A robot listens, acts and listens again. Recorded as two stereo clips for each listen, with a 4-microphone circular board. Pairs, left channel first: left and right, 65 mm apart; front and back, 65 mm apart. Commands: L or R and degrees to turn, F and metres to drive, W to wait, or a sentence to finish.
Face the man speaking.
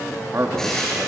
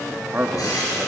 R125
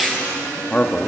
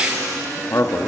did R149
L20
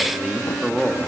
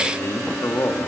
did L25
Found it: a man speaking, straight ahead.